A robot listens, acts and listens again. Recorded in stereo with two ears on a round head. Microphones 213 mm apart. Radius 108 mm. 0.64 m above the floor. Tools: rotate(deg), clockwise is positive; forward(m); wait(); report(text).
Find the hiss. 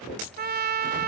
wait()
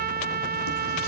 wait()
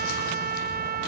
report("I can't make out a hiss, only a trumpet.")